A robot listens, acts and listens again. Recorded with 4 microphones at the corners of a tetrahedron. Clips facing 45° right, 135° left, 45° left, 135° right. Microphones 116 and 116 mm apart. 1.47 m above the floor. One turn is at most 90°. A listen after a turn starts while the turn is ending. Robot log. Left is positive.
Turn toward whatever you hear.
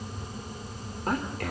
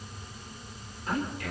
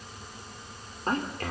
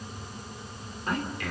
note: The man speaking: 10° right.
cmd yaw -10
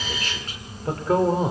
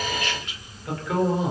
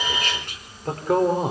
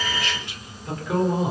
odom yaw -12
end: Found it: a man speaking, straight ahead.